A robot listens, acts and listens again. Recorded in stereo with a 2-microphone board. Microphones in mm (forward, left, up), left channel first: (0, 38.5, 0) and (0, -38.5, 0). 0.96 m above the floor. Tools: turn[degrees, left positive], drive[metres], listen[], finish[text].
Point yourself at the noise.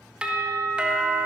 Action: turn[-30]
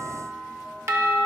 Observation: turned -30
Thought: So it is at 135° right.
Action: turn[-135]
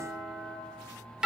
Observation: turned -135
Thought: The doorbell is now 10° right.
Action: turn[-10]
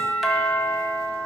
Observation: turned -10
Action: finish[Found it: a doorbell, straight ahead, 1 to 2 m away.]